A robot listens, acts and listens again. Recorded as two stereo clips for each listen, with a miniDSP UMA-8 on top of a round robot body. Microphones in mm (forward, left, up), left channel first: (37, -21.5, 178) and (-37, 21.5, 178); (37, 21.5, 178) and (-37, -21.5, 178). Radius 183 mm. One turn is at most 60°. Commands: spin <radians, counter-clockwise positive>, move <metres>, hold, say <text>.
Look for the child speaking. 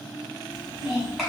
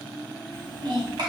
spin -1.05
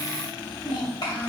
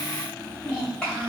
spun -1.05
spin -0.87
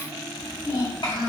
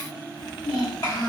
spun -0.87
spin -0.26
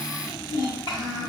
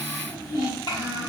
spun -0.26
say Facing the child speaking, 2 to 4 m away.